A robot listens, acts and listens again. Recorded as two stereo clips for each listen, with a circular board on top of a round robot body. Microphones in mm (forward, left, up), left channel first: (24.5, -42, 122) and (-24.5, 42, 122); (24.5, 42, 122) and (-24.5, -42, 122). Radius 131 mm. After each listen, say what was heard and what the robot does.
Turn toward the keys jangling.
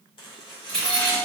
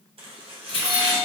The keys jangling: 20° left. Turn 20° left.
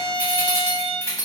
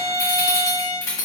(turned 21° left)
Facing the keys jangling.